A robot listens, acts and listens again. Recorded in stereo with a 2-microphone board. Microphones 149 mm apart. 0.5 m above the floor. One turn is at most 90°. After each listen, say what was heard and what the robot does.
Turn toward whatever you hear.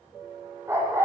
The dog barking: about 15° right or 165° right. Turn 15° right.
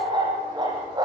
The dog barking: about 30° right or 150° right. Turn 30° right.
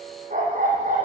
So it is at 120° right. Turn 90° right.
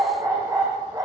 The dog barking is now 25° right. Turn 25° right.
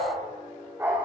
The dog barking is now 15° right. Turn 15° right.
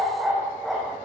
Facing the dog barking.